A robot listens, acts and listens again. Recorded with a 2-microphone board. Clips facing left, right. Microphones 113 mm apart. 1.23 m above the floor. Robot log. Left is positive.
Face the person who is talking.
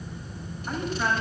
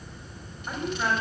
cmd yaw -30
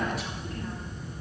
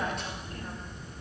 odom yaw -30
cmd idle
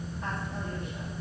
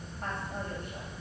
cmd idle
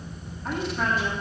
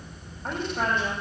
note: So it is at 125° right.
cmd yaw -125
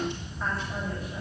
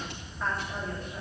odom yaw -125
cmd idle
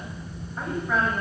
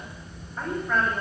end: Found it: a woman speaking, straight ahead.